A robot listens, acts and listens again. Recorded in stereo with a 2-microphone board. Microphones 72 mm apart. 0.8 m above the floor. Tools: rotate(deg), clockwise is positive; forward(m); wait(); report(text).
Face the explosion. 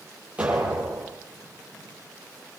rotate(15)
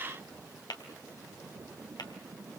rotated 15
wait()
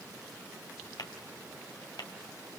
report("I heard an explosion, but can't make it out now. It was about straight ahead or 150° right.")